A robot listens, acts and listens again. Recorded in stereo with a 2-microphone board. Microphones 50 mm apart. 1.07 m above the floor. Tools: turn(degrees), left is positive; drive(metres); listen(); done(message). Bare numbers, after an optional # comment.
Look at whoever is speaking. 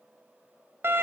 listen()
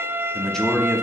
turn(30)
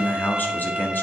# So it is at 135° left.
turn(135)
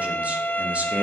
# The man speaking is now 30° right.
turn(-30)
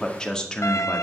# The man speaking is now 15° left.
turn(15)
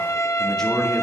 # The man speaking is now 10° left.
turn(10)
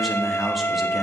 done("Found it: a man speaking, straight ahead.")